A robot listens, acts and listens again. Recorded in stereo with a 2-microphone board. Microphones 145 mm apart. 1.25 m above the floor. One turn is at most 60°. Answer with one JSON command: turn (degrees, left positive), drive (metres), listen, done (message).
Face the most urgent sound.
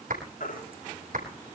{"turn": 60}
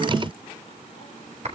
{"turn": 30}
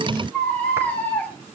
{"turn": 10}
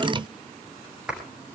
{"listen": true}
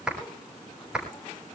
{"listen": true}
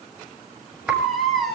{"done": "Facing the baby crying."}